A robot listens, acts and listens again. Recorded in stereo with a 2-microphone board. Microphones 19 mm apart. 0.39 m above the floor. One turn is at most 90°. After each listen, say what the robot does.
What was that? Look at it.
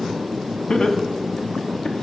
Turn 65° left.
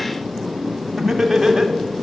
Turn 15° right.
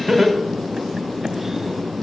Facing the laughter, 2 to 4 m away.